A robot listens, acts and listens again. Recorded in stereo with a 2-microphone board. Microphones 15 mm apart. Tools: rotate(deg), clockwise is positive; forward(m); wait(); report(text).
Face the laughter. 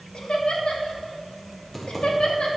rotate(-90)
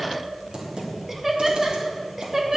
rotate(30)
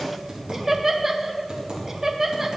rotate(25)
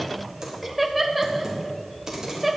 report("Found it: laughter, straight ahead.")